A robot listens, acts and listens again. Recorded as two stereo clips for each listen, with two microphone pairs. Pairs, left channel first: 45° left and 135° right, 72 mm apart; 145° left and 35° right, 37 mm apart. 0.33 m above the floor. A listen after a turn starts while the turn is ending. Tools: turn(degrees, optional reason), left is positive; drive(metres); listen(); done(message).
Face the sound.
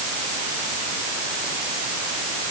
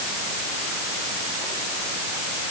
listen()
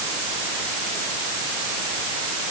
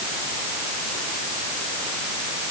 listen()
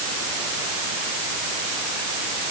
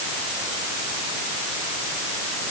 done("I can't make out anything.")